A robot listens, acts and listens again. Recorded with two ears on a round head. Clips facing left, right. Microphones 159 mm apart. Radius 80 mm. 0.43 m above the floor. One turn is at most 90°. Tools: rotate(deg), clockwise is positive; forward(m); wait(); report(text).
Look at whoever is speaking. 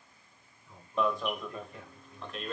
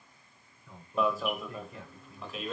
rotate(65)
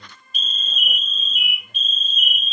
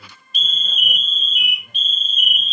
wait()
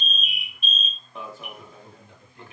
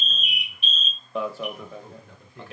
rotate(45)
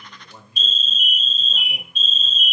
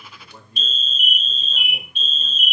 report("Found it: a man speaking, straight ahead, over 4 m away.")